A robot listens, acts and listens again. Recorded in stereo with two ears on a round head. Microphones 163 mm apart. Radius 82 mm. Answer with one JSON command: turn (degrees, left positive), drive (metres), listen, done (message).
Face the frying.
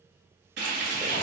{"turn": -60}
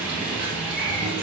{"listen": true}
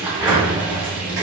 {"listen": true}
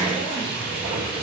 {"done": "I heard frying, but can't make it out now. It was about straight ahead or 60° right."}